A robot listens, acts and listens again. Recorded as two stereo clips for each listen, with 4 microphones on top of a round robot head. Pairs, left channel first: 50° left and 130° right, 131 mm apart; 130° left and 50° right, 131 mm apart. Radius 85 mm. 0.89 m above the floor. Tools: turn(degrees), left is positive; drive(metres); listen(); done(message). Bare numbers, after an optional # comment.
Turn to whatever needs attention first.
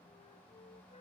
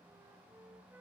listen()
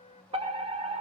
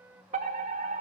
# The fire alarm: 80° right.
turn(-80)
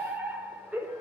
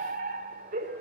# The fire alarm is now 45° right.
turn(-45)
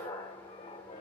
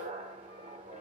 # The fire alarm is now 15° right.
turn(-15)
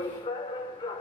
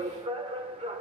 done("Found it: a fire alarm, straight ahead.")